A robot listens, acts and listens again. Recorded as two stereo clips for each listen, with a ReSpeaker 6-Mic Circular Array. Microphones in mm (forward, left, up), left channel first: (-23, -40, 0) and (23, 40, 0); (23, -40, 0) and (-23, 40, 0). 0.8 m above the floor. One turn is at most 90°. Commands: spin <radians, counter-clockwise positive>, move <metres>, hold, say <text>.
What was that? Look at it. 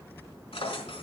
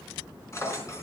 spin -1.57
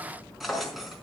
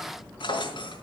spin -0.52
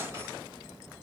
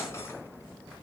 hold
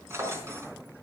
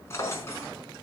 say Found it: a drawer, straight ahead.